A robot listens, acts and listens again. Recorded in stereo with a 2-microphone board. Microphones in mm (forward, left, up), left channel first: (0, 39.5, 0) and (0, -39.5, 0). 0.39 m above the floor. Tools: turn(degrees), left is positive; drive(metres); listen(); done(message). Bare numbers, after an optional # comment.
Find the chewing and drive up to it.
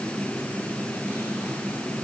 listen()
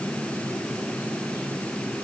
listen()
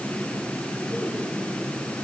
done("I can't make out chewing to turn to.")